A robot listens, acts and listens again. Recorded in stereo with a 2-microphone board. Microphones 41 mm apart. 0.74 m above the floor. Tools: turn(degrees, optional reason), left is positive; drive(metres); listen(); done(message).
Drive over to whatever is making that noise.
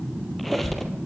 turn(degrees=30)
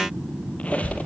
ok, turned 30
turn(degrees=145, reason="So it is at 145° left.")
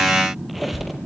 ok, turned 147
drive(metres=1.0)
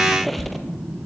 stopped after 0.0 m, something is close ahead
done("Something is in my way. I am facing the squeak but have not reached it.")